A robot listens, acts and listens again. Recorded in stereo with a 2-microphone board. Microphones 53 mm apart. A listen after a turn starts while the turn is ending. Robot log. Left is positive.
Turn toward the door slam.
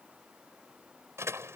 note: The door slam: about 60° right or 120° right.
cmd yaw -60
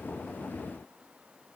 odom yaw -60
cmd idle
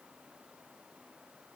end: I heard a door slam, but can't make it out now. It was about straight ahead or 60° right.